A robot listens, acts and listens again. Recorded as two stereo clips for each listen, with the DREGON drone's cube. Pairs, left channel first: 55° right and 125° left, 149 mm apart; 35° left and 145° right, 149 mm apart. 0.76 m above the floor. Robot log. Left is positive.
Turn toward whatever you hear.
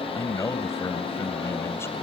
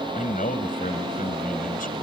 note: The man speaking: 15° left.
cmd yaw +15
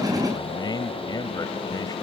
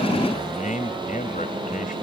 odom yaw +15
end: Facing the man speaking.